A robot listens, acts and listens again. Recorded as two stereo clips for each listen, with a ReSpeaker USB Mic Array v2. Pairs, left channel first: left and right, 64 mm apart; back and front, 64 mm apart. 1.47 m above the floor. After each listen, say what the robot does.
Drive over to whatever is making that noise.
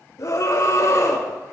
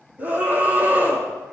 Turn 60° left.
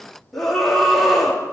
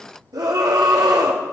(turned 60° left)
Drive 1.0 m forward.
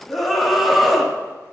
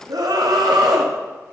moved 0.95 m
Drive 1.0 m forward.
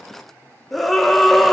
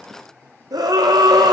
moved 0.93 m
Drive 1.0 m forward.
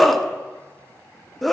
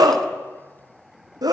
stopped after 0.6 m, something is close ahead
I am next to the scream.